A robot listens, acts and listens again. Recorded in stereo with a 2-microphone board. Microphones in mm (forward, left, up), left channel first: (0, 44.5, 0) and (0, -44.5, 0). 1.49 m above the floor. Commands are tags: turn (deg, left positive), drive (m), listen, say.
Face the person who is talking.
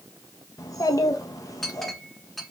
<turn deg="40"/>
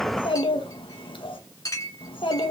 <turn deg="100"/>
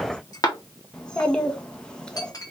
<turn deg="10"/>
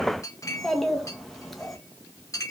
<say>Found it: a child speaking, straight ahead.</say>